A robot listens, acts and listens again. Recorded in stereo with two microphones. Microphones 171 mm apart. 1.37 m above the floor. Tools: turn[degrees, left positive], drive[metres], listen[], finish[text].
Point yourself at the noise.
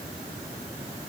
Action: listen[]
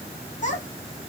Thought: The child speaking: about 45° left or 135° left.
Action: turn[45]
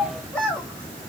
Action: finish[Found it: a child speaking, straight ahead.]